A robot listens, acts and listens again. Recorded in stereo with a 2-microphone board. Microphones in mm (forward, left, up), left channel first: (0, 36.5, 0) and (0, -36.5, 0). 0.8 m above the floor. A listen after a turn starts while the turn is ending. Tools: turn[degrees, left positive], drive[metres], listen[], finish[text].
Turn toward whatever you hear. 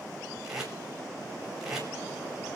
Action: turn[-30]
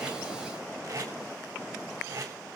Thought: So it is at 140° right.
Action: turn[-140]
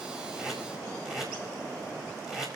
Action: finish[Facing the tape being pulled.]